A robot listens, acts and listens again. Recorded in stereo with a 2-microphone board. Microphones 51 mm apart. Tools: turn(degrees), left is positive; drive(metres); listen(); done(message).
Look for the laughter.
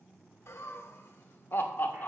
turn(degrees=45)
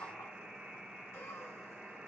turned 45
turn(degrees=125)
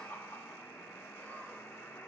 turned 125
turn(degrees=45)
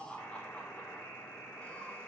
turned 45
turn(degrees=25)
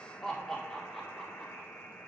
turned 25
turn(degrees=10)
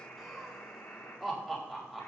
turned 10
done("Found it: laughter, straight ahead.")